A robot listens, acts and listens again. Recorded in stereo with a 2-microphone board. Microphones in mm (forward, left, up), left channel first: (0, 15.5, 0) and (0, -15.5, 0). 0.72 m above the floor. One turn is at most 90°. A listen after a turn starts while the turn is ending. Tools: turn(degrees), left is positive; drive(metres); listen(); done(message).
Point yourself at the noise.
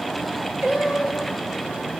turn(degrees=-60)
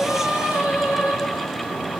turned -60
turn(degrees=-60)
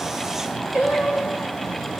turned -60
turn(degrees=-30)
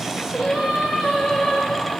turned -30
turn(degrees=-15)
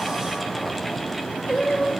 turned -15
done("Facing the singing, over 4 m away.")